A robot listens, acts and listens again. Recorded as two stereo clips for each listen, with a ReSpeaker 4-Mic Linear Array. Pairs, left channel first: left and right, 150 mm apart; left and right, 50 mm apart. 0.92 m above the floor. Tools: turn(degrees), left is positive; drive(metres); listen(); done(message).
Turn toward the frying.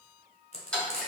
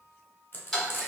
turn(degrees=45)
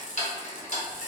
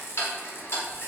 listen()
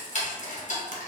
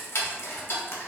listen()
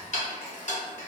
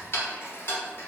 done("I heard frying, but can't make it out now. It was about straight ahead or 90° left.")